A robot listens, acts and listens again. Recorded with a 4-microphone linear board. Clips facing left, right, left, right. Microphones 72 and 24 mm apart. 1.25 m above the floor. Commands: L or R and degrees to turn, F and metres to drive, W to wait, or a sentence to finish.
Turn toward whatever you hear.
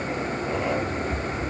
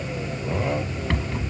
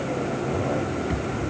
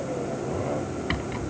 R90
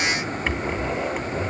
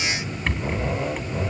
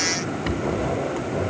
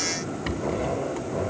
Found it: a rattle, straight ahead.